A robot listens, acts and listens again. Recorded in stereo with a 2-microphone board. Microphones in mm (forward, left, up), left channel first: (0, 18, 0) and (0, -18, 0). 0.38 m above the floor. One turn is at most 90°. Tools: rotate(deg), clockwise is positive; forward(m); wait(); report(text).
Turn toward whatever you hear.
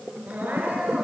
rotate(50)
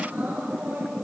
rotate(75)
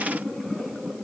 wait()
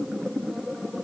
wait()
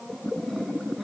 report("Facing where the crying came from. I can't hear it now.")